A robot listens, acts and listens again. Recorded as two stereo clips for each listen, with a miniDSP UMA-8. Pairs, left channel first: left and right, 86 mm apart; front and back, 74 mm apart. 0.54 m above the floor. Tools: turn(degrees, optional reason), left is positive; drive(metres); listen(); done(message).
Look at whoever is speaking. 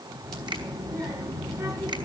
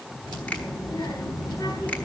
turn(degrees=-30, reason="The child speaking: 30° right.")
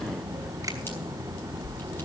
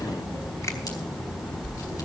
done("Found it: a child speaking, straight ahead.")